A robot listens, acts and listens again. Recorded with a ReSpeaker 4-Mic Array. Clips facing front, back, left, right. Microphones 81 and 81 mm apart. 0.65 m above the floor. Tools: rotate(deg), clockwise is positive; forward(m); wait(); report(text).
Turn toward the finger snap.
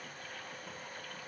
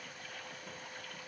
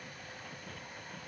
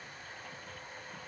wait()
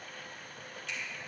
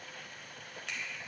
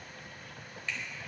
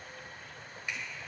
rotate(165)
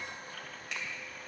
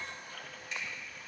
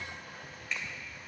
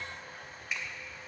rotate(10)
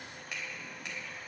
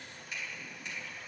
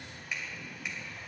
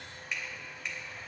report("Facing the finger snap, 2 to 4 m away.")